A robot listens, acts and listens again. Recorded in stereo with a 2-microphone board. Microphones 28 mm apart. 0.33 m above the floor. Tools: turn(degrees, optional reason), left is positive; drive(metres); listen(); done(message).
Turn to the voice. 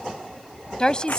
turn(degrees=25, reason="The woman speaking: about 25° left or 155° left.")
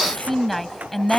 done("Facing the woman speaking.")